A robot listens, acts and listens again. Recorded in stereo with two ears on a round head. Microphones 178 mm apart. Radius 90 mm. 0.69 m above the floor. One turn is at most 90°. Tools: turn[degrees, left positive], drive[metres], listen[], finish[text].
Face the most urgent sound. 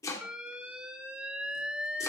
Action: turn[-30]
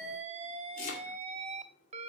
Thought: So it is at 145° right.
Action: turn[-90]
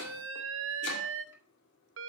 Thought: The alarm is now 95° right.
Action: turn[-90]
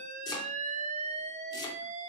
Thought: The alarm is now 35° right.
Action: turn[-35]
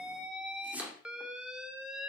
Action: finish[Found it: an alarm, straight ahead, 1 to 2 m away.]